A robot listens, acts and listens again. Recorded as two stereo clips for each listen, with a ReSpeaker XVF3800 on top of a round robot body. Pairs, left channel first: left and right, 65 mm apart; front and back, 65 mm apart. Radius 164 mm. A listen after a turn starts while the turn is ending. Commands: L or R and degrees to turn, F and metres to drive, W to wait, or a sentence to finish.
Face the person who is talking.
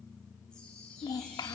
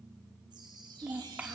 L115
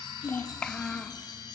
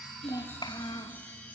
L10
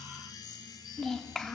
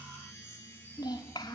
Found it: a child speaking, straight ahead.